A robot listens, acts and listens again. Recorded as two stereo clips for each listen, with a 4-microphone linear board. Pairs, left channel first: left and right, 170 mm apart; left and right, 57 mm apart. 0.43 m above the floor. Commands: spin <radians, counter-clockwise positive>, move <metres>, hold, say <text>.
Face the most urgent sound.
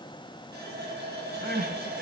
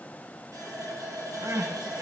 spin -1.13
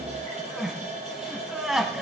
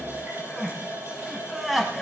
say Found it: crying, straight ahead.